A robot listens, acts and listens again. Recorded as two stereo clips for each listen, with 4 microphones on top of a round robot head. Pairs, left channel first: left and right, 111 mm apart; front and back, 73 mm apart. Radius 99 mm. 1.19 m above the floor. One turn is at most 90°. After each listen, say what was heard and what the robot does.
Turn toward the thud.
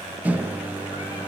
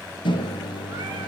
Keep listening.
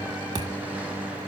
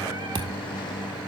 The thud: 155° right. Turn 90° right.
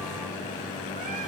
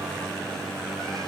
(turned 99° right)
Nothing new. It was at 55° right. Turn 55° right.
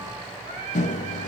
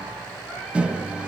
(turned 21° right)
Nothing new. It was at 35° right. Turn 35° right.
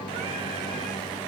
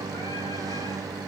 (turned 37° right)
I heard a thud from this way, but can't make it out now.